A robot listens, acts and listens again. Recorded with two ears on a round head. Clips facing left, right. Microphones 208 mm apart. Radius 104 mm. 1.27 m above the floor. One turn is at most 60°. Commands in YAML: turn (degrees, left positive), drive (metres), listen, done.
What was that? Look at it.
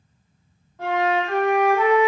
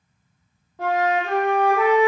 turn: -60
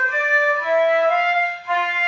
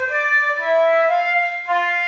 turn: -50
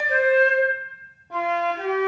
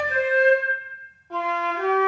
turn: 15
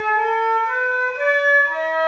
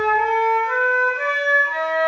done: "Found it: a flute, straight ahead."